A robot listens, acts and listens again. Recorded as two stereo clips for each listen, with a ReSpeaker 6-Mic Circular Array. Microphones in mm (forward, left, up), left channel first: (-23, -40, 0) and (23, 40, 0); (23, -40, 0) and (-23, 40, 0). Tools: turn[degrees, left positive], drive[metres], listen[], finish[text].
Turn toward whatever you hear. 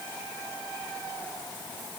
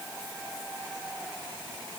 Action: listen[]
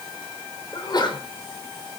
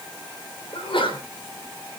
Thought: The sneeze: 80° right.
Action: turn[-80]
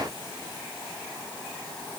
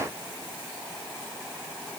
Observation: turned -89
Action: finish[I heard a sneeze from this way, but can't make it out now.]